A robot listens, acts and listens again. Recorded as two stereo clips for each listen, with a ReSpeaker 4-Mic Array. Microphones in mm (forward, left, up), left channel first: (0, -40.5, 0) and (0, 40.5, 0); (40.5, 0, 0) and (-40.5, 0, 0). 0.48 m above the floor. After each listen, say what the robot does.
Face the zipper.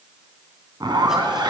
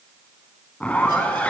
Turn 70° left.
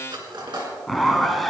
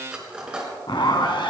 Found it: a zipper, straight ahead, 1 to 2 m away.